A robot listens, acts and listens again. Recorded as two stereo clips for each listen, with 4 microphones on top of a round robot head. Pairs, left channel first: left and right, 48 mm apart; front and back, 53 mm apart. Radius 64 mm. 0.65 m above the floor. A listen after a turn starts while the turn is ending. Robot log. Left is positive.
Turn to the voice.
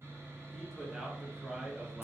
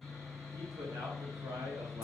note: The man speaking: 170° right.
cmd yaw -170
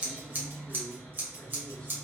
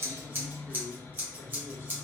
note: The man speaking is now 10° left.
cmd yaw +10
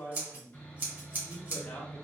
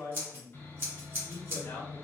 note: The man speaking is now 35° left.
cmd yaw +35
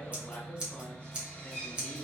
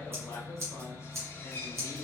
cmd idle
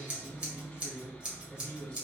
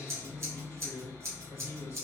note: The man speaking is now 20° left.
cmd yaw +20
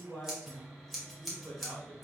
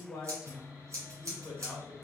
end: Found it: a man speaking, straight ahead, 1 to 2 m away.